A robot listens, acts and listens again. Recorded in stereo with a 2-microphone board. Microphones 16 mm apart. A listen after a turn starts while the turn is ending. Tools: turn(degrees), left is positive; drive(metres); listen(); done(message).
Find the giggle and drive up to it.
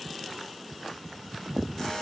listen()
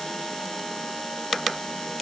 listen()
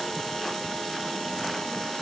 done("I can't make out a giggle, only a buzzer.")